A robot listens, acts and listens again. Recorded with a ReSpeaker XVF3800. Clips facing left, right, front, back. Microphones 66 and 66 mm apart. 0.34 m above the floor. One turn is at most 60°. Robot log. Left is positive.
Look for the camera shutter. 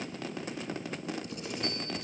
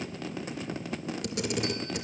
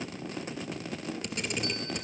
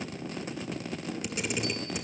note: The camera shutter: 95° right.
cmd yaw -60
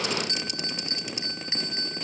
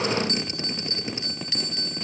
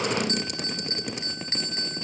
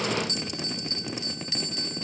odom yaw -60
note: Nothing new. It was at 35° right.
cmd yaw -35
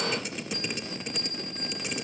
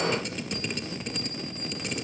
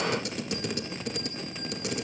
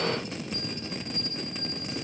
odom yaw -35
end: Found it: a camera shutter, straight ahead, 2 to 4 m away.